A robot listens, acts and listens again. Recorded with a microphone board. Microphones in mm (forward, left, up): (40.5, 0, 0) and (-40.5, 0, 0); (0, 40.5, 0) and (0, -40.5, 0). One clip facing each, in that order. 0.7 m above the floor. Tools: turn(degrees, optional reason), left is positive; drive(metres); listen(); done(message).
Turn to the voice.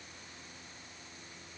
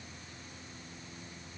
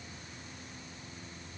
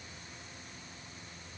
listen()
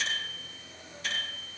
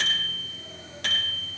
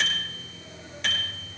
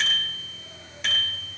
listen()
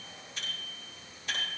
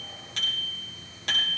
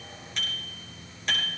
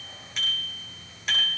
done("I can't make out anyone speaking to turn to.")